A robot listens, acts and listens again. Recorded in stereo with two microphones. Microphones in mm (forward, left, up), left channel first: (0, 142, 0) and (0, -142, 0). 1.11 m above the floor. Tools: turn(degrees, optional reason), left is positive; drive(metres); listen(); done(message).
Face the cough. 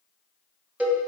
listen()
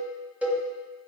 listen()
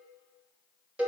done("I can't make out a cough to turn to.")